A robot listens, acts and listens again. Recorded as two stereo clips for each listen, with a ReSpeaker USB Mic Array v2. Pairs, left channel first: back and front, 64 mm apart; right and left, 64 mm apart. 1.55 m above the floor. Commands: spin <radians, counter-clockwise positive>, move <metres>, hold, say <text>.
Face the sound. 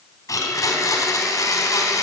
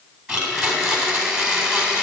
spin 2.71
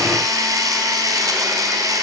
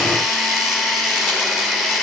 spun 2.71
spin -0.17
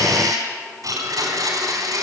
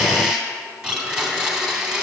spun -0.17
say Found it: a blender, straight ahead.